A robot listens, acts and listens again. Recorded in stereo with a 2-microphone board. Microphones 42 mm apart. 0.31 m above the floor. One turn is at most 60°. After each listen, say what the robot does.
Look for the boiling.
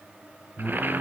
Turn 55° right.
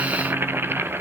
Turn 60° right.
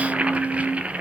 Turn 35° right.
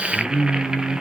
Turn 20° right.
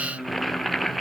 Facing the boiling.